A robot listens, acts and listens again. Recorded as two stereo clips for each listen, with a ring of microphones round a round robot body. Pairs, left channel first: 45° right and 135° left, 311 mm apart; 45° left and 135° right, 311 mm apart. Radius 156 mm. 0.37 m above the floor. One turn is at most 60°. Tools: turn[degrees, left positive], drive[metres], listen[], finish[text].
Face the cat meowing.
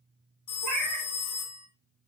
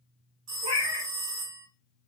Thought: The cat meowing: 155° left.
Action: turn[60]
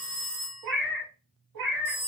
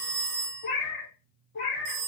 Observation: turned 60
Thought: The cat meowing is now 105° left.
Action: turn[60]
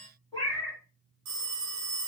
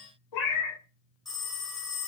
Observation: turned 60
Thought: The cat meowing is now 35° left.
Action: turn[35]
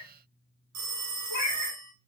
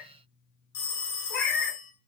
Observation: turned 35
Action: finish[Facing the cat meowing, 1 to 2 m away.]